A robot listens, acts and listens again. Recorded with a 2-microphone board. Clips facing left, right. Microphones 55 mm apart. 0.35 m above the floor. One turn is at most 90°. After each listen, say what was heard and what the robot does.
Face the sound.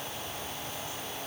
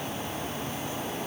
Keep listening.
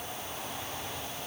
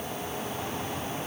Keep listening.
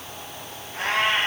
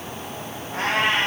The cat meowing: about 65° right or 115° right. Turn 65° right.
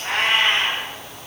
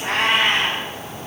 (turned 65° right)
Facing the cat meowing.